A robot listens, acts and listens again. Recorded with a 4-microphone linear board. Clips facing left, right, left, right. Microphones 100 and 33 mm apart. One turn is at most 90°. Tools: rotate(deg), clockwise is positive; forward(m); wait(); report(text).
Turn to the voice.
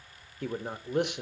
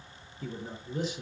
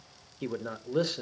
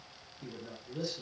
rotate(-70)
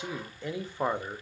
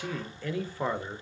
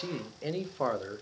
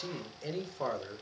rotate(-20)
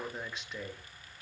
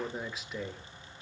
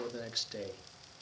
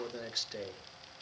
report("Facing the man speaking.")